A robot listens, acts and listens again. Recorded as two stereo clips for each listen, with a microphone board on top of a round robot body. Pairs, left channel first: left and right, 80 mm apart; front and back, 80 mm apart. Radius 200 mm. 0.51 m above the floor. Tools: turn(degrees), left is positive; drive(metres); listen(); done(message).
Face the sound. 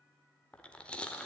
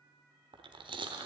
turn(degrees=165)
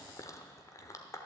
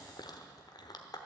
turn(degrees=35)
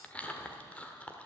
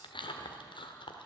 turn(degrees=15)
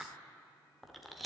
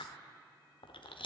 done("Facing the chewing.")